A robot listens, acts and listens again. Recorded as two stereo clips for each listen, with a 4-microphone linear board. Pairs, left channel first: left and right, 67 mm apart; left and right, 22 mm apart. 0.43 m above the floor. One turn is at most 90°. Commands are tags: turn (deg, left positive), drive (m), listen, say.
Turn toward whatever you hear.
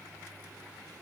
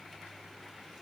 <listen/>
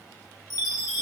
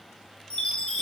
<turn deg="90"/>
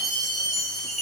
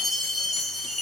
<say>Found it: a chime, straight ahead, under 1 m away.</say>